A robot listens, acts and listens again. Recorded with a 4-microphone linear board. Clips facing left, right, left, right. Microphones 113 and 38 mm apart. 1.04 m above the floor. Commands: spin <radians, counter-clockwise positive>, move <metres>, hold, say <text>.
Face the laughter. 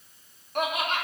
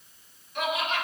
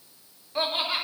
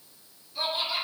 spin 0.87
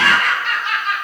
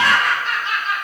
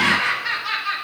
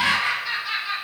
spin 1.31
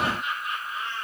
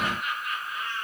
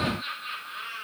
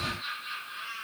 spin 0.52
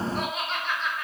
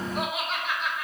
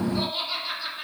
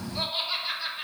say Found it: laughter, straight ahead.